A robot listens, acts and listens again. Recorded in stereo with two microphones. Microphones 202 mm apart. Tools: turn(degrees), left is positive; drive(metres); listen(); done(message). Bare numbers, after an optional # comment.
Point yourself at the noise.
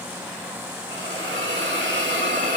# The hiss: about 65° right or 115° right.
turn(-65)
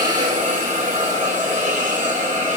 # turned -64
# So it is at 40° right.
turn(-40)
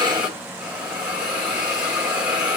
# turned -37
done("Found it: a hiss, straight ahead.")